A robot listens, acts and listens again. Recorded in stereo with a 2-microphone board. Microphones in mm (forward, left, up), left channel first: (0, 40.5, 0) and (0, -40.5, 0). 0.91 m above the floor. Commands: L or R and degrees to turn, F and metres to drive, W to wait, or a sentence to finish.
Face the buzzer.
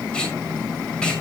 W
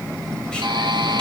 R90
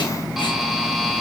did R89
Found it: a buzzer, straight ahead, 2 to 4 m away.